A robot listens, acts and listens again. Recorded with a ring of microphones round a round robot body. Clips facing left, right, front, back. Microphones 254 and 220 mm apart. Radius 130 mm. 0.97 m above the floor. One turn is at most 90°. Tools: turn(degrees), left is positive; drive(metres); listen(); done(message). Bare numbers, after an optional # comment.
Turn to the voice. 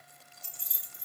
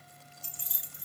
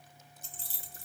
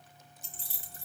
listen()
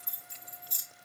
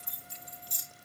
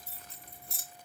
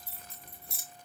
listen()
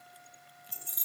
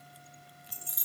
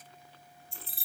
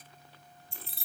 done("I can't make out anyone speaking, only keys jangling.")